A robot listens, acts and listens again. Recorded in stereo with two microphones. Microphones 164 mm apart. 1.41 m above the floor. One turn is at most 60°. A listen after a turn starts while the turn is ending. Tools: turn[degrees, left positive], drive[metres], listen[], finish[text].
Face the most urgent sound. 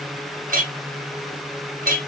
Action: listen[]
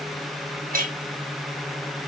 Action: listen[]
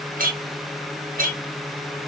Action: finish[I can't make out anything urgent to turn to.]